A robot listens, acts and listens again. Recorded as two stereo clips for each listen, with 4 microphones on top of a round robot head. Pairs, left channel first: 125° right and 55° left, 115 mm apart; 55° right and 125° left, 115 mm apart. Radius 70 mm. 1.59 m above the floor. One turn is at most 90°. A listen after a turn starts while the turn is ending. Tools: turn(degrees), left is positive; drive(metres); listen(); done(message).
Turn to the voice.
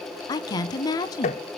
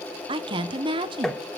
turn(degrees=90)
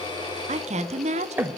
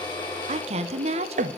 turn(degrees=85)
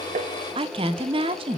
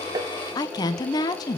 done("Facing the woman speaking, 1 to 2 m away.")